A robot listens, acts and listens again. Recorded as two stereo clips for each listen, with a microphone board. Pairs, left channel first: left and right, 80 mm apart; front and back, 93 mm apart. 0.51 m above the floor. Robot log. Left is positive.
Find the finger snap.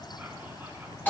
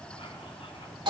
cmd idle
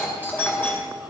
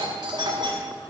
cmd idle
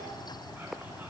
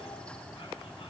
end: I can't make out a finger snap to turn to.